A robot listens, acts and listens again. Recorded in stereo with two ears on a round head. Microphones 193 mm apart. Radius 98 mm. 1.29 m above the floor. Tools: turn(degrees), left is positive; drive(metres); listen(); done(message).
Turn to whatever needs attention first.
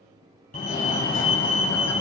turn(degrees=40)
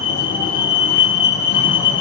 turn(degrees=95)
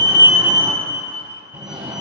turn(degrees=-20)
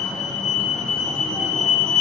done("Found it: a fire alarm, straight ahead.")